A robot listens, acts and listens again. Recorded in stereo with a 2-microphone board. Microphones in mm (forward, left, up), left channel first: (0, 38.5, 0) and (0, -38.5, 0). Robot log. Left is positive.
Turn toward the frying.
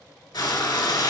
note: The frying: about 70° left or 110° left.
cmd yaw +70
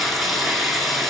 end: Found it: frying, straight ahead, 1 to 2 m away.